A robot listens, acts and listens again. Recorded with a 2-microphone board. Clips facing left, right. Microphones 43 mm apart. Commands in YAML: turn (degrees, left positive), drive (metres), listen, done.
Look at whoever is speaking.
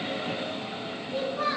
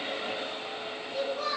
turn: 35
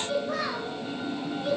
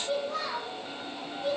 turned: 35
turn: 105
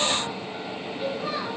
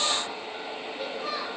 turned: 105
turn: 10
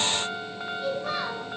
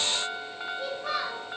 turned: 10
done: "Found it: a child speaking, straight ahead."